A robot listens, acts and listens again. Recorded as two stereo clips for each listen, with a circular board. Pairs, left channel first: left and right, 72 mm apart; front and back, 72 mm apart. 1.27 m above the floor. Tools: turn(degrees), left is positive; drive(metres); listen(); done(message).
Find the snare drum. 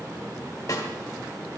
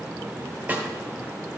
turn(degrees=120)
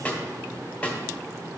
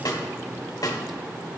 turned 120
turn(degrees=20)
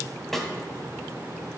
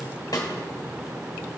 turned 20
done("Facing the snare drum, 1 to 2 m away.")